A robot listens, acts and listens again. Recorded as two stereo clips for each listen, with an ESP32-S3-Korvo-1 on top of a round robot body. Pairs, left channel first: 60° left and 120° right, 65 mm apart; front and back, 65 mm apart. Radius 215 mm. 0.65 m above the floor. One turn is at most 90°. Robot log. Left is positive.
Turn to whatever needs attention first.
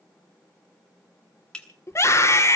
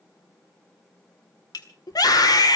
note: The scream: 15° left.
cmd yaw +15
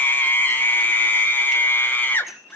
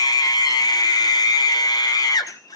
end: Found it: a scream, straight ahead, 2 to 4 m away.